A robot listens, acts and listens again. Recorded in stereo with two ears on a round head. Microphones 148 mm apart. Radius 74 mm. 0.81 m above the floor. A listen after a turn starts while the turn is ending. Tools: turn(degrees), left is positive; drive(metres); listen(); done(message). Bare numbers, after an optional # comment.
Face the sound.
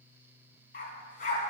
# The dog barking: about 50° left or 130° left.
turn(50)
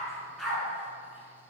done("Found it: a dog barking, straight ahead, 2 to 4 m away.")